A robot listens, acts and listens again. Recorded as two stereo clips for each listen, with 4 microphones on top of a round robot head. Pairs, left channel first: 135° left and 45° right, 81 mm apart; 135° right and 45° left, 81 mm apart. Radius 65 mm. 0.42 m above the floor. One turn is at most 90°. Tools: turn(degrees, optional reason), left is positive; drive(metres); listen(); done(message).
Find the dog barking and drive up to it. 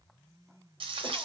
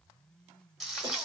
listen()
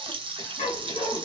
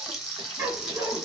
turn(degrees=90, reason="The dog barking: 110° left.")
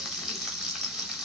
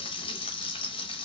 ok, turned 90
turn(degrees=20, reason="Nothing new. It was at 20° left.")
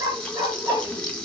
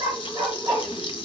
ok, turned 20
drive(metres=1.0)
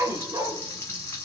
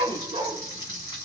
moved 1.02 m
turn(degrees=10, reason="The dog barking is now 10° left.")
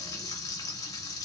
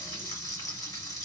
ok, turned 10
listen()
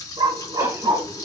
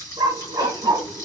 drive(metres=1.0)
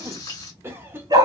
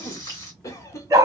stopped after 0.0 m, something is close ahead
done("Arrived at the dog barking, straight ahead.")